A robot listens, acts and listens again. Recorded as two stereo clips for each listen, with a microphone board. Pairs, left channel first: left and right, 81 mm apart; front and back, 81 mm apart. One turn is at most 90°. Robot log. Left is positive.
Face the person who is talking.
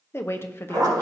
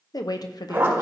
note: The woman speaking: 30° left.
cmd yaw +30
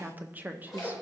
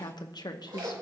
note: The woman speaking is now 25° right.
cmd yaw -25
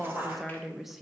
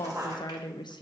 end: Found it: a woman speaking, straight ahead, under 1 m away.